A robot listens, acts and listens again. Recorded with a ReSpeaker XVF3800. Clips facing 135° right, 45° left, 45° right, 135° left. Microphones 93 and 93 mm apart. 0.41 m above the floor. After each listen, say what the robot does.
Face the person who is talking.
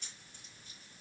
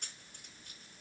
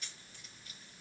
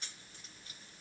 Keep listening.
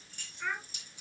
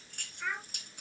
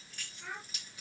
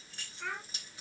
Turn 140° left.
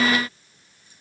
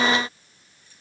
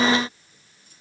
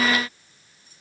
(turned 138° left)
Keep listening.
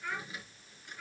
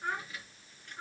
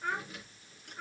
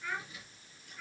Found it: a child speaking, straight ahead, over 4 m away.